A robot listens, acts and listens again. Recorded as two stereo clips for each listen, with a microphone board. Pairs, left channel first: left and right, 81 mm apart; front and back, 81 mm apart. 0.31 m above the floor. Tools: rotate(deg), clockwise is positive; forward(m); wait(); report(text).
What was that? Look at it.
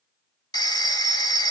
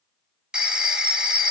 rotate(-100)
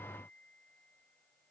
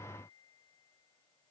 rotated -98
wait()
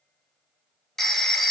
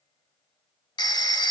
report("Found it: a phone ringing, straight ahead.")